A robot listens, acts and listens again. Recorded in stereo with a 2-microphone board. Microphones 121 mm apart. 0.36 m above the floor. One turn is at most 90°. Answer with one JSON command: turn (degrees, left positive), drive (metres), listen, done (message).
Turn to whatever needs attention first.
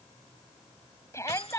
{"turn": 25}
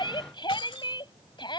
{"turn": 90}
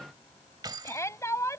{"turn": 30}
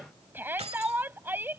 {"turn": -20}
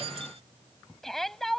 {"done": "Found it: a shout, straight ahead."}